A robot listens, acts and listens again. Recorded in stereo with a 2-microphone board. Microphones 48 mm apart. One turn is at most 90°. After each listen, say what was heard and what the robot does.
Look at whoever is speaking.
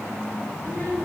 Turn 90° right.
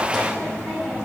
Found it: a child speaking, straight ahead, over 4 m away.